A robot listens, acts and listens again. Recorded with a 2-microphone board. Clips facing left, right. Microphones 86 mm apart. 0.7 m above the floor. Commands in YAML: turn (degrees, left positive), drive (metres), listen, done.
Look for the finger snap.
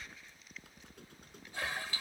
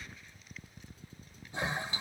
listen: true
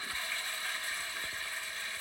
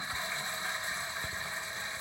listen: true
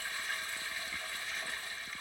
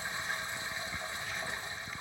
done: "I can't make out a finger snap to turn to."